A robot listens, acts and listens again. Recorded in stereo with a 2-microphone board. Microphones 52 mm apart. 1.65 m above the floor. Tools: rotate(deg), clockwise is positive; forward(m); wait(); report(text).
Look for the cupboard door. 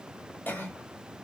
wait()
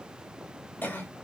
wait()
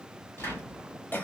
rotate(-55)
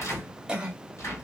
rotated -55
rotate(-70)
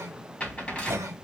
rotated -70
rotate(-20)
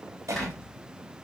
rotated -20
report("Found it: a cupboard door, straight ahead.")